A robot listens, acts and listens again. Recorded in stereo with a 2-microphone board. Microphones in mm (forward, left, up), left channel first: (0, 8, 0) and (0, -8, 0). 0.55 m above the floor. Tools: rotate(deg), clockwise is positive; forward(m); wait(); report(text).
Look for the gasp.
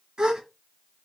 rotate(55)
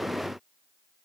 wait()
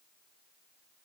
report("I heard a gasp, but can't make it out now. It was about straight ahead or 70° right.")